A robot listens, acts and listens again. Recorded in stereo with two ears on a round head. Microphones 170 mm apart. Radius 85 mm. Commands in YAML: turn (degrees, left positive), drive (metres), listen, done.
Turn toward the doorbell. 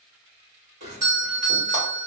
turn: -40
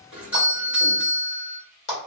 turn: -10
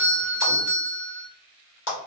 done: "Facing the doorbell."